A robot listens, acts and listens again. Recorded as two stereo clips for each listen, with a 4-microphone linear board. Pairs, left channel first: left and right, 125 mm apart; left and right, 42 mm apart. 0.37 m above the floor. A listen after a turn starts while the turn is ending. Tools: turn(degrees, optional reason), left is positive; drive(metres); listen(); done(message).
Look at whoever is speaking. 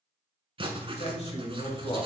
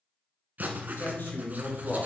turn(degrees=55, reason="The man speaking: about 55° left or 125° left.")
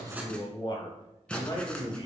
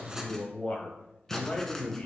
turn(degrees=40, reason="So it is at 40° left.")
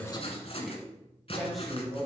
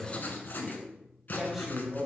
done("Found it: a man speaking, straight ahead, 1 to 2 m away.")